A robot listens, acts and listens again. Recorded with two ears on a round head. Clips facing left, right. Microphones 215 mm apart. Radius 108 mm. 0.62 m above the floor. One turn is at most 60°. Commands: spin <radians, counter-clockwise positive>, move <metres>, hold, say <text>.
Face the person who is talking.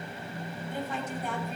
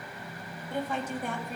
spin -0.87
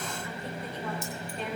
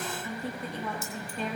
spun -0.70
spin -1.05
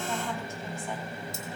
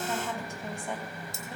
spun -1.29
spin -0.26
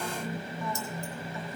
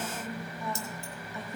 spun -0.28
hold
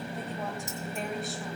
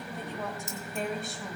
say Found it: a woman speaking, straight ahead, 2 to 4 m away.